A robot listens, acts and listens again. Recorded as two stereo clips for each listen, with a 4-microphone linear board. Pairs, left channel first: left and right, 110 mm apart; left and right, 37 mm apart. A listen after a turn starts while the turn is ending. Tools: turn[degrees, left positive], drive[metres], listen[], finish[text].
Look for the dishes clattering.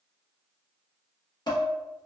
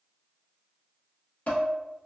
Thought: The dishes clattering: about 40° left or 140° left.
Action: turn[40]
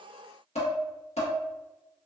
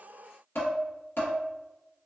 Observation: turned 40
Thought: So it is at 100° left.
Action: turn[100]
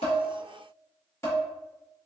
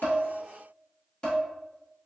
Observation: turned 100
Thought: The dishes clattering is now 25° left.
Action: turn[25]
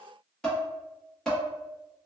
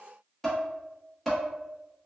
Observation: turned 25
Action: finish[Facing the dishes clattering.]